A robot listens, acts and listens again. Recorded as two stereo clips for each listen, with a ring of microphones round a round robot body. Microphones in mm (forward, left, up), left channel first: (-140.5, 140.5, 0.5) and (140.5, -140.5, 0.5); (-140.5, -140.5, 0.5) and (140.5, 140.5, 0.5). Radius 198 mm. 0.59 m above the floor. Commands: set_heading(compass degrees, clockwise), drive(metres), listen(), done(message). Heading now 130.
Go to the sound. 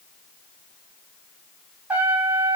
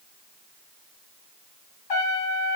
set_heading(260)
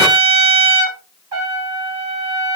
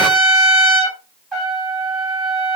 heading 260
set_heading(305)
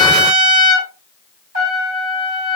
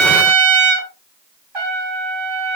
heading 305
set_heading(290)
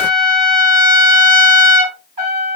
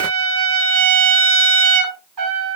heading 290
drive(1.0)
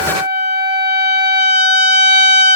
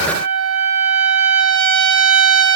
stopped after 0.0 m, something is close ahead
done("Blocked. The trumpet is further on, straight ahead.")